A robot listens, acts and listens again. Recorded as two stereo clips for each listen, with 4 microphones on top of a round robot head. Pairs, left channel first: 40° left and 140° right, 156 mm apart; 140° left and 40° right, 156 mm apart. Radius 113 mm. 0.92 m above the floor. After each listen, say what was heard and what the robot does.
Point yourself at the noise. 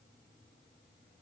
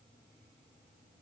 Keep listening.
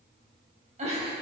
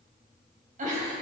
The giggle: 85° right. Turn 85° right.
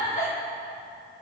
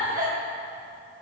Found it: a giggle, straight ahead, 2 to 4 m away.